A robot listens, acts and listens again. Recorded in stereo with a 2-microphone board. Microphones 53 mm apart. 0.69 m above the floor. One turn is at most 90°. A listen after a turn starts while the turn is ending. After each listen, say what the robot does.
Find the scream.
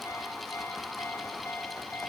Keep listening.
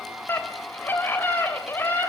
Turn 40° left.
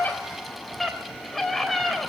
Found it: a scream, straight ahead, 2 to 4 m away.